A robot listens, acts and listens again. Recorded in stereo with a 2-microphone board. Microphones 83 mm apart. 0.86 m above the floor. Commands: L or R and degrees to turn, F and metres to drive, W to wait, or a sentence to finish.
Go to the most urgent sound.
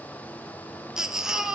R30
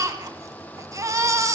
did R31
R140
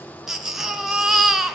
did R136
F1.0
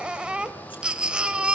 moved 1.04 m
R10
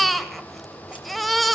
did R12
F1.0
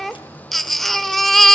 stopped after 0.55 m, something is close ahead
Arrived at the baby crying, straight ahead.